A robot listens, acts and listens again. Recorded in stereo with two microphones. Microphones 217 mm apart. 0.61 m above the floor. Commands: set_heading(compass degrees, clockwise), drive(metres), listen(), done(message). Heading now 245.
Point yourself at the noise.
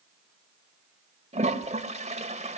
set_heading(275)
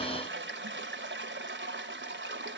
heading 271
set_heading(31)
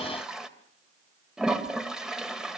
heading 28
done("Facing the toilet flushing.")